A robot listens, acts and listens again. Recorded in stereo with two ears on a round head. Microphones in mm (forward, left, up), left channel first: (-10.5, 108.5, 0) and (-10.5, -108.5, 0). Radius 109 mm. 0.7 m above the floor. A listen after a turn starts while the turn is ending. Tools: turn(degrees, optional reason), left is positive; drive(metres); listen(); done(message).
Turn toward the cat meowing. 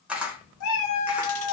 turn(degrees=70, reason="The cat meowing: about 70° left or 110° left.")
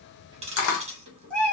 done("Facing the cat meowing, 1 to 2 m away.")